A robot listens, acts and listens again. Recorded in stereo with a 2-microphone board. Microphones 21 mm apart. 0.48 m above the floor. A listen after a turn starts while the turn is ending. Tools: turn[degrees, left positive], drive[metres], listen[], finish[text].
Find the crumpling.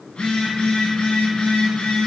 Action: listen[]
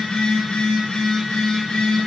Action: listen[]
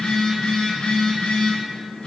Action: finish[I can't make out crumpling, only a phone buzzing.]